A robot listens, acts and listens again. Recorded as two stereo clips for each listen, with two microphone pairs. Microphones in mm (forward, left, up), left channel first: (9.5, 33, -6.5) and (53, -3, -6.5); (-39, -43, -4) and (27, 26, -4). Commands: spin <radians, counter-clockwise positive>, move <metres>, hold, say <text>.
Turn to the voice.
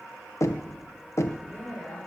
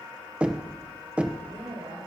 spin 1.05
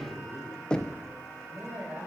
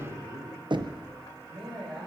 say Found it: a man speaking, straight ahead, over 4 m away.